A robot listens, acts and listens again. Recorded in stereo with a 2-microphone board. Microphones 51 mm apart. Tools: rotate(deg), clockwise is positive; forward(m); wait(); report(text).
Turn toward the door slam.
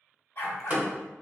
rotate(30)
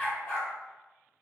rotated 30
wait()
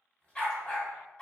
report("I heard a door slam, but can't make it out now. It was about straight ahead or 120° right.")